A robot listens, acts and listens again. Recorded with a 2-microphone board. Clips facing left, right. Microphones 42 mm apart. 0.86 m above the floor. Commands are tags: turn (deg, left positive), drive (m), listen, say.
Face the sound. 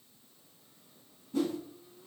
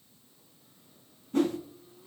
<turn deg="-50"/>
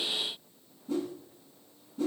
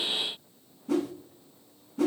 <turn deg="-80"/>
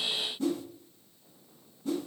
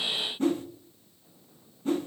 <turn deg="-40"/>
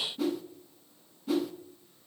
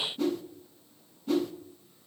<say>Facing the whoosh, under 1 m away.</say>